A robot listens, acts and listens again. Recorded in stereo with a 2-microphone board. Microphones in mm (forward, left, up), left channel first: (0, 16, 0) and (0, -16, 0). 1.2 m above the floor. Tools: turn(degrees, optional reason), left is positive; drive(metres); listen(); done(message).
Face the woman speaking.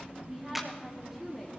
turn(degrees=-30)
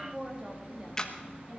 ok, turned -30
turn(degrees=-155, reason="So it is at 155° right.")
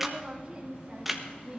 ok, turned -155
turn(degrees=-20, reason="The woman speaking is now 20° right.")
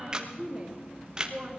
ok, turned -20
done("Found it: a woman speaking, straight ahead.")